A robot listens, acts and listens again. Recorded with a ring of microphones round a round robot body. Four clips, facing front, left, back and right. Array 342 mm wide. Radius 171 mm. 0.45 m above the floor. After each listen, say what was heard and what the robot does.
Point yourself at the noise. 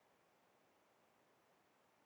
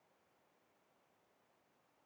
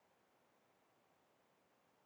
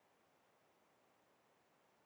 Keep listening.
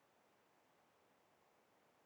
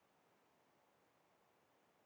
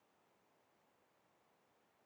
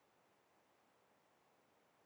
Keep listening.
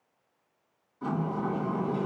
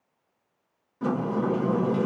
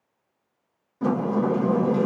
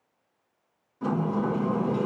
The sliding door: 165° left. Turn 165° left.
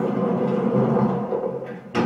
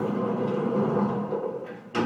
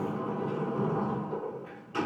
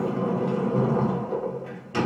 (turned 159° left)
Found it: a sliding door, straight ahead, 2 to 4 m away.